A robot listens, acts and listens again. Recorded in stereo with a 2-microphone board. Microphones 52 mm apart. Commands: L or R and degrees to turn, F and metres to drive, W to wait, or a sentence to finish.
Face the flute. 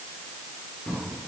W
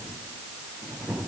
W
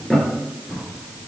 I can't make out a flute, only a drawer.